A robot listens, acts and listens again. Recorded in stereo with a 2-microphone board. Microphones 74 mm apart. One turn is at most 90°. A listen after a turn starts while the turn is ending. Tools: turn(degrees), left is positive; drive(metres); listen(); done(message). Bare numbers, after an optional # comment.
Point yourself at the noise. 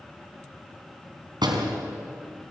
turn(-90)
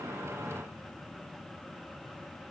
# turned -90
done("I heard a door slam from this way, but can't make it out now.")